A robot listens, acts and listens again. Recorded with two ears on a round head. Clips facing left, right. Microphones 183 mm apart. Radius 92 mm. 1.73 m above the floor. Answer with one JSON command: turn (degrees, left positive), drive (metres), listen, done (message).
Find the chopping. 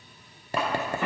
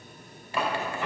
{"turn": 30}
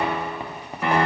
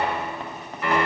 {"listen": true}
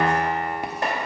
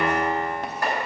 {"turn": 155}
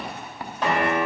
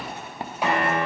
{"listen": true}
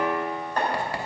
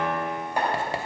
{"turn": -10}
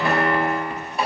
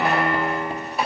{"done": "Found it: chopping, straight ahead, 2 to 4 m away."}